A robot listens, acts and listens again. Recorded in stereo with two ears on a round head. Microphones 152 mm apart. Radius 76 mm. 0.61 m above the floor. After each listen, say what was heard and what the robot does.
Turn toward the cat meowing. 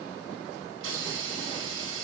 Keep listening.
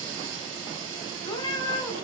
The cat meowing: about 20° left or 160° left. Turn 20° left.
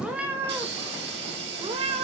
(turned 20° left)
So it is at 40° right. Turn 40° right.
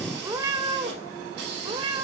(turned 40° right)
The cat meowing is now 25° right. Turn 25° right.
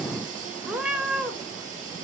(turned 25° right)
Found it: a cat meowing, straight ahead, 1 to 2 m away.